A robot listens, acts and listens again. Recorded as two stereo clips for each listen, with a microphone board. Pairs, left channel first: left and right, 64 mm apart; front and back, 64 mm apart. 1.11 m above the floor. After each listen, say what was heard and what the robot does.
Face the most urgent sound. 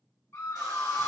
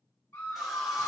The scream: 35° left. Turn 35° left.
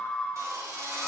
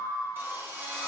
Found it: a scream, straight ahead.